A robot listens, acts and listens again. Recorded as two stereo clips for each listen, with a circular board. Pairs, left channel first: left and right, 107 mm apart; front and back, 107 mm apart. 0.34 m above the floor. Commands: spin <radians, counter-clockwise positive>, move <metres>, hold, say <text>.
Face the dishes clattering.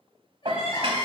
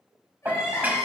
spin -1.92
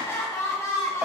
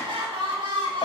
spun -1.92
hold
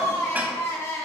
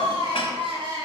hold
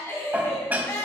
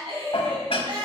spin -0.35
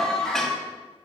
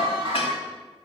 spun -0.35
hold
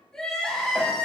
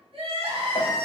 hold
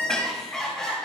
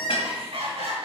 say Facing where the dishes clattering came from. I can't hear it now.